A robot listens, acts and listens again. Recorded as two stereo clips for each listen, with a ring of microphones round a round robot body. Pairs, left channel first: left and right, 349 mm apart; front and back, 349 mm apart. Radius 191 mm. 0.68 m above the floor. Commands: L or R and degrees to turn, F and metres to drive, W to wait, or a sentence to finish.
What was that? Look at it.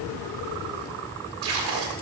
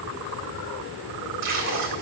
R125
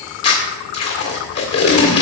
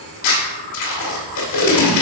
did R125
L45
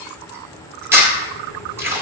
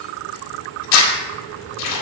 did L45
R10
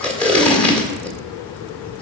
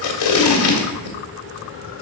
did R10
Facing the tape being pulled, 1 to 2 m away.